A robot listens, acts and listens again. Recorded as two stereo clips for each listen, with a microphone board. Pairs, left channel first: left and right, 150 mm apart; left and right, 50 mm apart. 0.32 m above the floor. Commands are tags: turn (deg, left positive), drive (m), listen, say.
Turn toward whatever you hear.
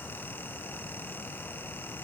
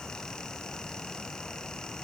<listen/>
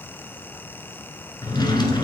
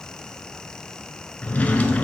<turn deg="30"/>
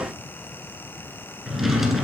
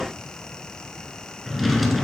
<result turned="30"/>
<say>Found it: a drawer, straight ahead.</say>